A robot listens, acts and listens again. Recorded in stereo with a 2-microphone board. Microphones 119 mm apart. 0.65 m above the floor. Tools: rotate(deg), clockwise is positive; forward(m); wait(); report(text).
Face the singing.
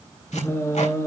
rotate(-25)
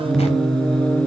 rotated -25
rotate(-30)
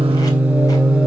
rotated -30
rotate(10)
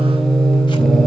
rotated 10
report("Facing the singing.")